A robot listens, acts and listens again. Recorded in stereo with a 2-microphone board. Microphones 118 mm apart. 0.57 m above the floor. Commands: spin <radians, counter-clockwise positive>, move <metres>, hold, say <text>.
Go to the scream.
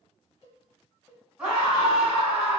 spin -0.52
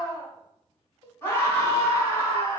spin 0.35
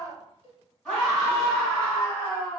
spin 0.17
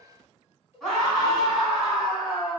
move 1.0
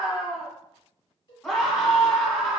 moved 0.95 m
move 1.0
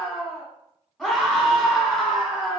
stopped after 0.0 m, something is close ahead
say I am next to the scream.